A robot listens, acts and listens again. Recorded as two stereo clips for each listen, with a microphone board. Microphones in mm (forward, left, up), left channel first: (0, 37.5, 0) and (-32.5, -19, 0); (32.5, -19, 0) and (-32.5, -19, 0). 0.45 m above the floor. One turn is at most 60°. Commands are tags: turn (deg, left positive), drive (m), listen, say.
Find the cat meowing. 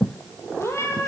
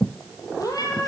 <turn deg="15"/>
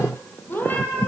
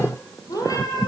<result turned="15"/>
<say>Found it: a cat meowing, straight ahead.</say>